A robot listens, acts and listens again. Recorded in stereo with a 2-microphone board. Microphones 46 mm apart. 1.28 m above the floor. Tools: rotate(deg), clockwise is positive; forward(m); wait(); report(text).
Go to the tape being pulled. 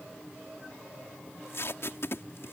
rotate(-60)
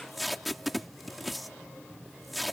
forward(1.0)
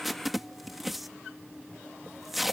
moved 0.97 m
forward(1.0)
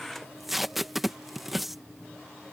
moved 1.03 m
forward(1.0)
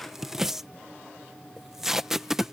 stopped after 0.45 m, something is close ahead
rotate(10)
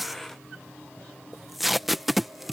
report("Arrived at the tape being pulled, straight ahead.")